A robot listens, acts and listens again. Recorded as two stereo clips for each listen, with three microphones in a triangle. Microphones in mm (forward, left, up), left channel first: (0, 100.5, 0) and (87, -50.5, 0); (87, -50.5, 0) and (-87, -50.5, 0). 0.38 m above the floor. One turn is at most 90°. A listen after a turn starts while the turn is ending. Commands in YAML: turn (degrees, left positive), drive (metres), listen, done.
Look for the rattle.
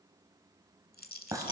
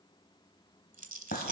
turn: 90
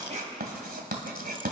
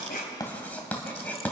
turn: 55
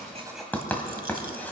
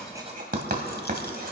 listen: true
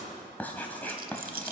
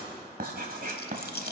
turn: -25
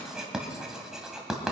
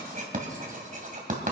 listen: true
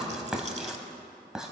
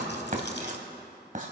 listen: true
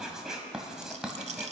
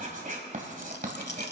turn: -10
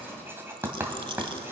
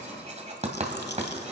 listen: true
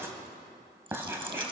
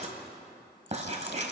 listen: true
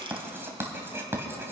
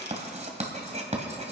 done: "Facing where the rattle came from. I can't hear it now."